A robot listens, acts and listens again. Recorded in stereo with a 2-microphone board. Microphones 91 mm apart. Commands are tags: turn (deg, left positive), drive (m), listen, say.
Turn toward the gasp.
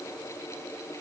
<listen/>
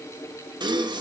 <turn deg="-55"/>
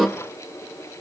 <say>Found it: a gasp, straight ahead.</say>